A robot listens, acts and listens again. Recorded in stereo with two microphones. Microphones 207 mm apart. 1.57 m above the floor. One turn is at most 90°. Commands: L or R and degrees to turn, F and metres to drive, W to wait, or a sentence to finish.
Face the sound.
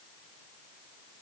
W
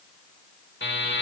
L60
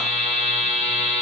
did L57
L40
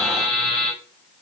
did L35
Facing the buzzer, under 1 m away.